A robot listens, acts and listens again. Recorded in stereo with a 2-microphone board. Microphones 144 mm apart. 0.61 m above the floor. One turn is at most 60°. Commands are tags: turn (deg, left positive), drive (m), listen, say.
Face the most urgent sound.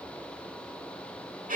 <listen/>
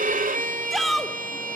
<turn deg="30"/>
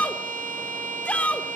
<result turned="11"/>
<turn deg="60"/>
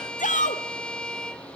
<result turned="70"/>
<turn deg="60"/>
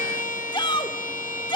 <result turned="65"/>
<turn deg="35"/>
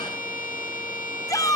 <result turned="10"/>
<turn deg="25"/>
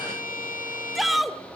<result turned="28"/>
<say>Found it: a shout, straight ahead, 1 to 2 m away.</say>